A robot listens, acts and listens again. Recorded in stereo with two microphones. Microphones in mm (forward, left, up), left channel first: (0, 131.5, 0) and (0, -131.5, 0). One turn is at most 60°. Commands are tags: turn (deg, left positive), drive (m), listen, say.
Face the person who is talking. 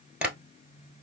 <listen/>
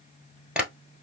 <listen/>
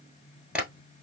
<say>I can't make out anyone speaking to turn to.</say>